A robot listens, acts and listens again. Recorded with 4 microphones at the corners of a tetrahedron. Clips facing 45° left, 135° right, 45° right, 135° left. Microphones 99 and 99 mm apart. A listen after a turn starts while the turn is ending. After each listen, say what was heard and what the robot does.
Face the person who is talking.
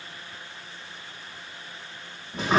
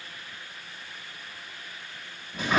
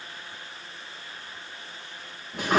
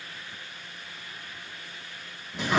Keep listening.
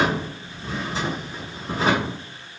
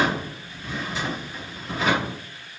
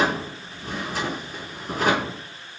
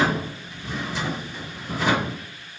Keep listening.
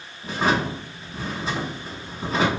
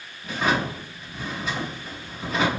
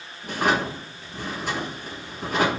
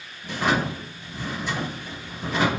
I can't make out anyone speaking to turn to.